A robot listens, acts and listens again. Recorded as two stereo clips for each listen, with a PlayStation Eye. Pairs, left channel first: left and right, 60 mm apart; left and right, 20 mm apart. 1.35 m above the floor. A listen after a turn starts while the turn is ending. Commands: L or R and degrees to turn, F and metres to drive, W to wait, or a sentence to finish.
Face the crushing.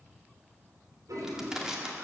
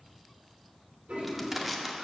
R30
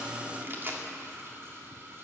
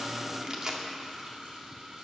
R140
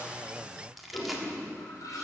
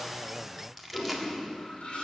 Found it: crushing, straight ahead, 1 to 2 m away.